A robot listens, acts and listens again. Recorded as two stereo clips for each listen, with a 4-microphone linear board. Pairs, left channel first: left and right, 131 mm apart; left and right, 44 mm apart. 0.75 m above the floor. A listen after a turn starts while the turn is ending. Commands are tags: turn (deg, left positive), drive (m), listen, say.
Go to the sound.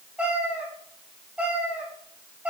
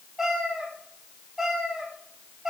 <turn deg="-30"/>
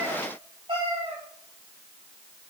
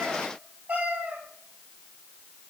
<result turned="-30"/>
<turn deg="-140"/>
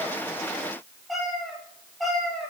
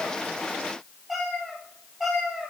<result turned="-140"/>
<drive m="1.0"/>
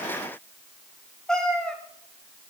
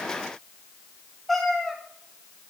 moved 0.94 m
<drive m="1.0"/>
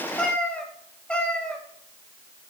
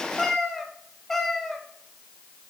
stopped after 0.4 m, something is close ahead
<turn deg="10"/>
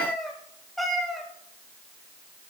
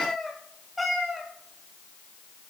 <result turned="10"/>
<say>I am next to the cat meowing.</say>